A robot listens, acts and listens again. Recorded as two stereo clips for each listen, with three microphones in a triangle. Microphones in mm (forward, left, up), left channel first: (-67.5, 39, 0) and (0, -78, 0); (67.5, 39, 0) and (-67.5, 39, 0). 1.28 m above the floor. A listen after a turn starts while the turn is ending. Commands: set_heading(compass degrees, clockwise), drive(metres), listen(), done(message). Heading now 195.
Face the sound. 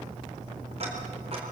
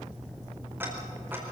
set_heading(300)
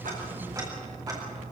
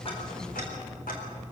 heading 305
done("Facing the ticking.")